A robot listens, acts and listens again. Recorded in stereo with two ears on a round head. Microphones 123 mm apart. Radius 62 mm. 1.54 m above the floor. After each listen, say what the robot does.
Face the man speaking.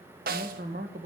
Turn 65° right.
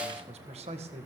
Turn 50° right.
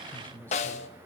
Turn 10° left.
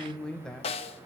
Found it: a man speaking, straight ahead.